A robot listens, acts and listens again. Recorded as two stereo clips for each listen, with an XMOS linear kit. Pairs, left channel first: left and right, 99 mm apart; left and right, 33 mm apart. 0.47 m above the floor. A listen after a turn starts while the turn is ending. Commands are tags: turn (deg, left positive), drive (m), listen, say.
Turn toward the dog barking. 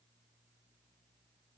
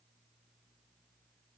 <listen/>
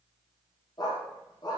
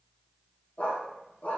<turn deg="45"/>
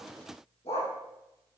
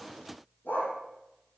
<turn deg="90"/>
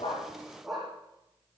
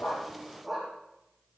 <say>Facing the dog barking.</say>